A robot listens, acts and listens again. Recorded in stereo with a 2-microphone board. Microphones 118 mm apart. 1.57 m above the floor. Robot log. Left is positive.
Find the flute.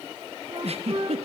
note: The flute: about 60° right or 120° right.
cmd yaw -60
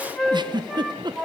end: Found it: a flute, straight ahead.